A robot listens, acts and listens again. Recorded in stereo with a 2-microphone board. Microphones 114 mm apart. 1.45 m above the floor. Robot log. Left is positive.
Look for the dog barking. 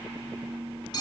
cmd idle
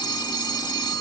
cmd idle
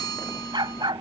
note: The dog barking: about 45° right or 135° right.
cmd yaw -45
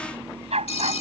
note: So it is at 80° right.
cmd yaw -80
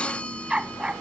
note: The dog barking is now 10° right.
cmd yaw -10
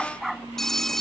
end: Facing the dog barking.